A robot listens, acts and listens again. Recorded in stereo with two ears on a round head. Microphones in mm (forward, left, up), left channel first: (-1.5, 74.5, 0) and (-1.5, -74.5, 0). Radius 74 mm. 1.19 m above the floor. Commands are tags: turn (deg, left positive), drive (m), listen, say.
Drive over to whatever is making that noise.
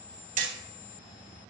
<turn deg="-50"/>
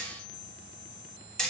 <drive m="1.0"/>
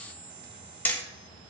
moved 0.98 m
<turn deg="10"/>
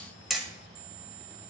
<drive m="1.0"/>
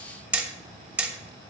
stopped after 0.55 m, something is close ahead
<turn deg="-10"/>
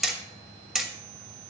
<say>Arrived at the hammering, straight ahead.</say>